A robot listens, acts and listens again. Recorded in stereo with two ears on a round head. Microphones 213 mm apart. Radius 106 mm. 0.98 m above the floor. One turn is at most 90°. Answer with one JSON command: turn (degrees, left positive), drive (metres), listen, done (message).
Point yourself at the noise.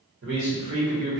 {"turn": -45}
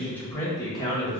{"turn": 25}
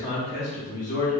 {"turn": 35}
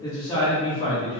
{"turn": 25}
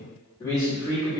{"turn": 15}
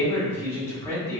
{"done": "Found it: a man speaking, straight ahead."}